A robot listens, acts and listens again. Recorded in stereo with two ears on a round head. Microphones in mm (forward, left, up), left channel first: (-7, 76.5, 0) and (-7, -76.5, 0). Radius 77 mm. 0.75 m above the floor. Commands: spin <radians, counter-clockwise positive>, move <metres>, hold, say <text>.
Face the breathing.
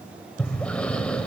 spin 0.52
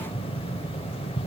spin 2.44
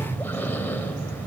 spin 0.26
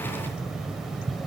say Facing the breathing.